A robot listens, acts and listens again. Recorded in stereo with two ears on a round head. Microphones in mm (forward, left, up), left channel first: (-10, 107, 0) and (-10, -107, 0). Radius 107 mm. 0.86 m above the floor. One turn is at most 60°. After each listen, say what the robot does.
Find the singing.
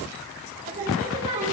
Turn 30° right.
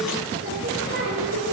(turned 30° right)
Turn 60° right.
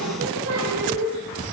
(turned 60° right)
Turn 60° right.
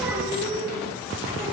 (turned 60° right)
Turn 15° right.
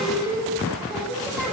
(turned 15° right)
Found it: singing, straight ahead.